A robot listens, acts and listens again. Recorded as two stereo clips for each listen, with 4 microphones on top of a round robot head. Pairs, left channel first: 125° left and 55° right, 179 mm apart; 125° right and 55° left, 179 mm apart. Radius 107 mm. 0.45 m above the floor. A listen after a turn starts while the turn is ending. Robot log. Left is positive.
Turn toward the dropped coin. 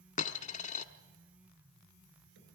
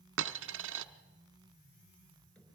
note: The dropped coin: 75° left.
cmd yaw +75
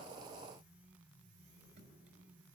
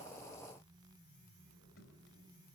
end: Facing where the dropped coin came from. I can't hear it now.